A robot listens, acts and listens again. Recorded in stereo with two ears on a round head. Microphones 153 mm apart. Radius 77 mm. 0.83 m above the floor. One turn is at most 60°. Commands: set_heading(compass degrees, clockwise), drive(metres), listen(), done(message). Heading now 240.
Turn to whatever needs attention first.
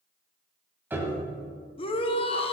set_heading(205)
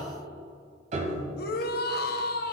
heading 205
set_heading(145)
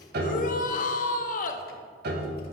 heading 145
set_heading(95)
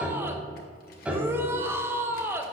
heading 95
set_heading(110)
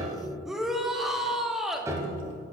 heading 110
done("Facing the shout, under 1 m away.")